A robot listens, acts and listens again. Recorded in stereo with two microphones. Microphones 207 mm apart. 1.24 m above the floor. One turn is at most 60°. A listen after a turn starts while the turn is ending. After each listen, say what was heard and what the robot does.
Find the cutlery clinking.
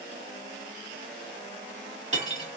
The cutlery clinking: about 35° right or 145° right. Turn 35° right.
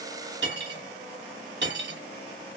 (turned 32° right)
So it is at 105° right. Turn 60° right.
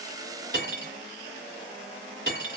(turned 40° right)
The cutlery clinking is now 65° right. Turn 60° right.
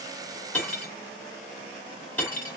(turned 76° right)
The cutlery clinking is now 10° left. Turn 10° left.
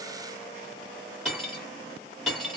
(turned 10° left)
Found it: cutlery clinking, straight ahead.